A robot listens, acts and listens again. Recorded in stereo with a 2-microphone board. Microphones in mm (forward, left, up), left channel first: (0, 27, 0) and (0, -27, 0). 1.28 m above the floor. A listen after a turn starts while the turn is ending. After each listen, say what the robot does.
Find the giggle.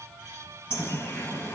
Keep listening.
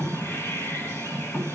Keep listening.
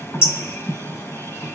I can't make out a giggle to turn to.